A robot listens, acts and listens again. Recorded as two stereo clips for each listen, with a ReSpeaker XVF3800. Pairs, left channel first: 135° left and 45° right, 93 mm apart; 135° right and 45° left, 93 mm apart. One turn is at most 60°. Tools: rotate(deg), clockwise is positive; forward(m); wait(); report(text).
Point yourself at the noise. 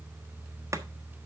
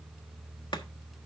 wait()
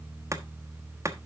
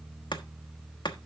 rotate(60)
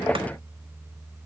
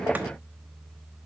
rotate(40)
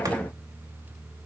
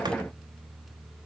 wait()
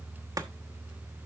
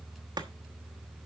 report("Facing where the chopping came from. I can't hear it now.")